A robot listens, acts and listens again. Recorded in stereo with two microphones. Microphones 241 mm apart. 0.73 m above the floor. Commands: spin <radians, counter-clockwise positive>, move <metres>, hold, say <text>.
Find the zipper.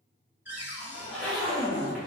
spin 0.52
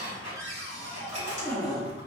spin -0.44
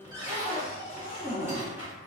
spin -0.17
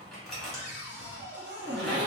say Facing the zipper, 1 to 2 m away.